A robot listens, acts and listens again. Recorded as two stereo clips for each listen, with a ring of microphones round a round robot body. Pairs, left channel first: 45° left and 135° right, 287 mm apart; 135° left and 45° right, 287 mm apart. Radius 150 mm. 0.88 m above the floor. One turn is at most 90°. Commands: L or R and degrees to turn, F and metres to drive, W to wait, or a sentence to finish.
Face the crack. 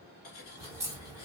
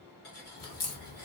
L90
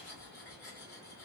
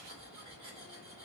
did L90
L55
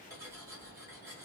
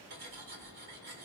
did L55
I heard a crack from this way, but can't make it out now.